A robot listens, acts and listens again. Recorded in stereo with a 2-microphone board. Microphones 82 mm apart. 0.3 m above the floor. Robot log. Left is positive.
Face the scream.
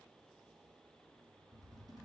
cmd idle
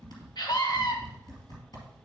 note: The scream: about 60° left or 120° left.
cmd yaw +60
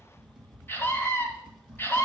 note: So it is at 30° left.
cmd yaw +30
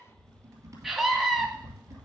end: Facing the scream, 1 to 2 m away.